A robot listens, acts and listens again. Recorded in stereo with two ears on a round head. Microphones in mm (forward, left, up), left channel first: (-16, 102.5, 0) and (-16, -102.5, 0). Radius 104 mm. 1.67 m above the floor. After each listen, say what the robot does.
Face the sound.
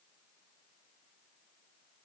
Keep listening.
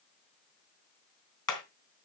Turn 20° left.
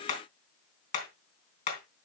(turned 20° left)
Turn 140° left.
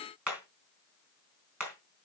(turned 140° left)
Facing the hammering, 2 to 4 m away.